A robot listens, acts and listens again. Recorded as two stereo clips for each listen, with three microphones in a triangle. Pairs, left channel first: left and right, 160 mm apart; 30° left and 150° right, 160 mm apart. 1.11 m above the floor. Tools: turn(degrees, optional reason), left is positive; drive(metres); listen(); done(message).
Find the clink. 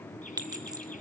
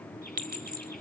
turn(degrees=-155, reason="The clink: 155° right.")
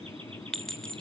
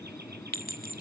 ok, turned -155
done("Found it: a clink, straight ahead.")